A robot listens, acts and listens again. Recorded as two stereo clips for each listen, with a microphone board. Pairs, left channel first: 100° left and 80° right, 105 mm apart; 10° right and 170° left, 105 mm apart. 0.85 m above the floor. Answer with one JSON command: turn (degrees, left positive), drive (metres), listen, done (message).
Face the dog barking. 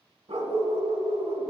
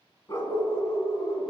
{"turn": -55}
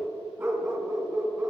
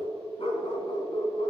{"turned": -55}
{"done": "Facing the dog barking, 1 to 2 m away."}